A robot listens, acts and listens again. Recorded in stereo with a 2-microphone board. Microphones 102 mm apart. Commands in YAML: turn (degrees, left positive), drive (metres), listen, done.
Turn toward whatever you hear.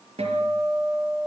turn: -90
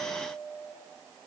done: "Found it: a guitar, straight ahead."